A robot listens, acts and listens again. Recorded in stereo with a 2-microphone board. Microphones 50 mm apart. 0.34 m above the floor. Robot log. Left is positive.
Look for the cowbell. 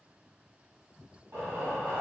cmd idle
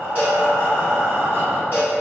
note: The cowbell: about 30° right or 150° right.
cmd yaw -30
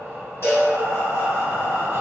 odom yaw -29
note: So it is at 120° right.
cmd yaw -120
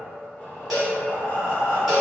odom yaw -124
end: Facing the cowbell.